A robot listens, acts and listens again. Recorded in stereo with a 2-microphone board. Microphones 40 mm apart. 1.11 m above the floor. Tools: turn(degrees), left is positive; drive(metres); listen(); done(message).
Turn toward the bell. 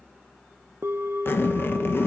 turn(degrees=-75)
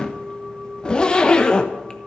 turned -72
turn(degrees=-25)
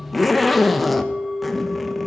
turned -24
done("Found it: a bell, straight ahead, 1 to 2 m away.")